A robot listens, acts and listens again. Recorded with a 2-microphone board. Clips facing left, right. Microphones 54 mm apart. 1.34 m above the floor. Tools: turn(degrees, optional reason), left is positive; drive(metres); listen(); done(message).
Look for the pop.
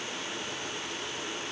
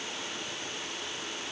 listen()
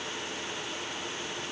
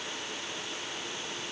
listen()
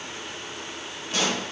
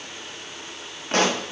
turn(degrees=-55, reason="The pop: about 55° right or 125° right.")
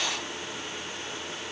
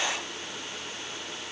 listen()
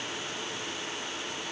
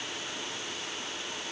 done("I heard a pop, but can't make it out now. It was about straight ahead or 70° right.")